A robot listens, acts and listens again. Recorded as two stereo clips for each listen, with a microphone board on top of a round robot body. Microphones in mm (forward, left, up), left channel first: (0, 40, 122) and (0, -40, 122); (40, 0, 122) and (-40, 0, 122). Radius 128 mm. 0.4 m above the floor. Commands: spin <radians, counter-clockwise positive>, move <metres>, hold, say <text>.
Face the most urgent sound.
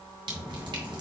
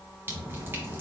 hold
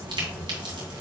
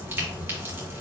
hold
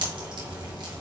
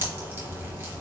say I can't make out anything urgent, only dripping.